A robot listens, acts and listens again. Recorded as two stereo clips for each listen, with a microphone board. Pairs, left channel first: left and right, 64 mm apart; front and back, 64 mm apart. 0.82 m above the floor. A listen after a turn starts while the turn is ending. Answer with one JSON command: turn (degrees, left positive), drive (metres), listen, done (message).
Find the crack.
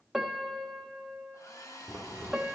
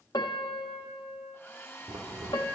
{"turn": 150}
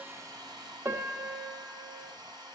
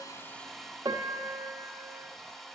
{"done": "Facing where the crack came from. I can't hear it now."}